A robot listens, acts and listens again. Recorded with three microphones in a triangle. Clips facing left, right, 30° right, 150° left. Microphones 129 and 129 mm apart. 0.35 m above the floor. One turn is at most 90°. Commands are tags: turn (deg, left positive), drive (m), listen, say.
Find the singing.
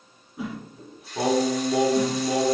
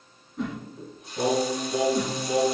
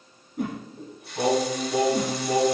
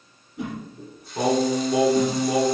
<turn deg="75"/>
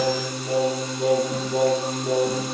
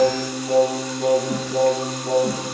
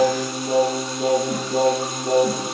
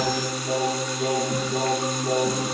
<turn deg="-15"/>
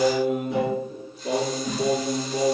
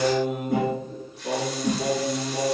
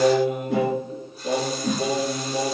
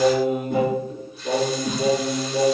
<say>Facing the singing, 2 to 4 m away.</say>